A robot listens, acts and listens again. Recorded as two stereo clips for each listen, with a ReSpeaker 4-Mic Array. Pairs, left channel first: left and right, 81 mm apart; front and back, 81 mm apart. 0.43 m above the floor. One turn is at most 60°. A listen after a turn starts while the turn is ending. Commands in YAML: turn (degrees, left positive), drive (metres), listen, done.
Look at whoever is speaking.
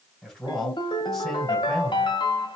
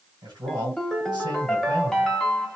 turn: 60
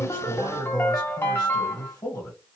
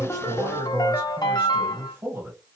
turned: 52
turn: 60
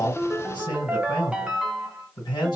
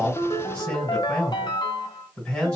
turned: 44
turn: 60
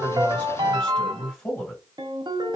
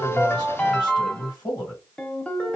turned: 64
turn: 20
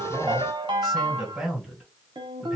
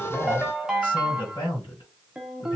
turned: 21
done: "Found it: a man speaking, straight ahead."